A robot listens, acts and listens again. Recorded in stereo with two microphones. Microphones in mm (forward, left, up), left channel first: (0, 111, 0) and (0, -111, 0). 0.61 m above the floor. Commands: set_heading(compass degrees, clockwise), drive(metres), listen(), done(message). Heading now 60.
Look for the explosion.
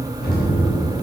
set_heading(15)
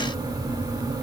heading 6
listen()
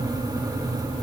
done("I heard an explosion, but can't make it out now. It was about 5° right or 80° left.")